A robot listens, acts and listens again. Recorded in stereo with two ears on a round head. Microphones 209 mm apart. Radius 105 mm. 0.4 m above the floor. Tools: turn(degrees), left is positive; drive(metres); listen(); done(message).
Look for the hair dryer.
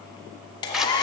turn(degrees=20)
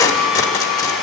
done("Facing the hair dryer.")